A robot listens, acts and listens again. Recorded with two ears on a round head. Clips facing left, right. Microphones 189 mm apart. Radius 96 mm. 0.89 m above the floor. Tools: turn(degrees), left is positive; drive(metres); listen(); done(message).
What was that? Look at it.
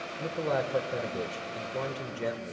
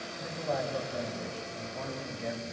turn(degrees=70)
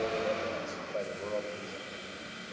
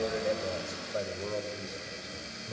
turn(degrees=-20)
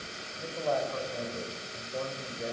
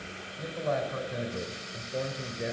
turn(degrees=-20)
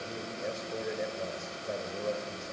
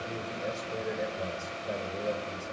done("Found it: a man speaking, straight ahead.")